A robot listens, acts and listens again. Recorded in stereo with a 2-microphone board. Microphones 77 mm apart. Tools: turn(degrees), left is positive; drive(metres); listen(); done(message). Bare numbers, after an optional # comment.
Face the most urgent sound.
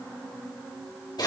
listen()
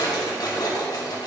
listen()
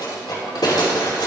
done("I can't make out anything urgent, only a drawer.")